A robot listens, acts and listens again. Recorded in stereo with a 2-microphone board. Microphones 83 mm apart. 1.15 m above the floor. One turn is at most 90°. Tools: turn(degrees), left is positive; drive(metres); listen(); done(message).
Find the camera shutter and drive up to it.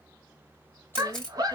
turn(degrees=30)
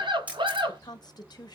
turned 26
turn(degrees=-15)
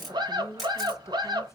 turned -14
drive(metres=1.0)
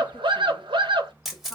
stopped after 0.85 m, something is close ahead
done("Something is in my way. I am facing the camera shutter but have not reached it.")